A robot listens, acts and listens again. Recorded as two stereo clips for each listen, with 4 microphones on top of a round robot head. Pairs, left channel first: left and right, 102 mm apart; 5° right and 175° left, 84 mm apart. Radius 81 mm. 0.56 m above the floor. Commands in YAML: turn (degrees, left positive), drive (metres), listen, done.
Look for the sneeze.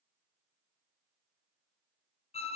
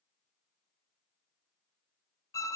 listen: true
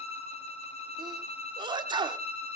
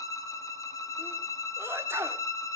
turn: -125
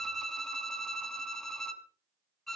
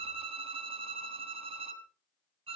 done: "Facing where the sneeze came from. I can't hear it now."